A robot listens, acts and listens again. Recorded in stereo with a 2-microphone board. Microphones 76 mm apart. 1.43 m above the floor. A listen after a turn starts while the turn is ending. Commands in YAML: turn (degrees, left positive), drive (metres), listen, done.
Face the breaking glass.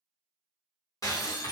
turn: 45
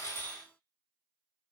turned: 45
listen: true
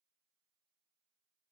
done: "I heard breaking glass, but can't make it out now. It was about straight ahead or 90° left."